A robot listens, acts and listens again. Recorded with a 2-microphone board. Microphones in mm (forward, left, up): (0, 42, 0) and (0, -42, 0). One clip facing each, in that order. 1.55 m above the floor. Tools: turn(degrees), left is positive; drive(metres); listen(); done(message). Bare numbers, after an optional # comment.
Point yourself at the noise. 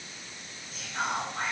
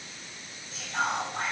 turn(-90)
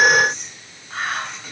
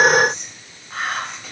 done("Found it: whispering, straight ahead, 1 to 2 m away.")